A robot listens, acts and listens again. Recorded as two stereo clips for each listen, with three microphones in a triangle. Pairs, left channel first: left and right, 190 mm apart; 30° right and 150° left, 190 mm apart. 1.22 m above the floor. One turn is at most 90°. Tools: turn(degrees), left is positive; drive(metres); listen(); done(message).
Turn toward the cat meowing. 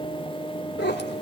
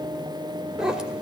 turn(degrees=65)
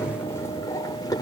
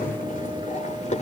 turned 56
turn(degrees=20)
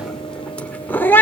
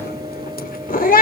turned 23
turn(degrees=10)
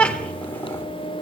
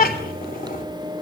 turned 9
done("Facing the cat meowing.")